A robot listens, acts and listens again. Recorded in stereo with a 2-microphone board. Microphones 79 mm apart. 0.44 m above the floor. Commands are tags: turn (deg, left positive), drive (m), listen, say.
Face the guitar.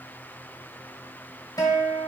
<turn deg="55"/>
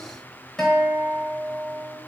<turn deg="10"/>
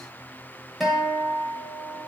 <say>Facing the guitar, 1 to 2 m away.</say>